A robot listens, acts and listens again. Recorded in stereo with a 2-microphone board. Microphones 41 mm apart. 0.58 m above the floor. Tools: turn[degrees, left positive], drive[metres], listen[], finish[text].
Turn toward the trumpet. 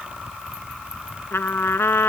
Thought: The trumpet: about 75° left or 105° left.
Action: turn[75]
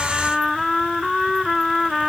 Action: finish[Found it: a trumpet, straight ahead.]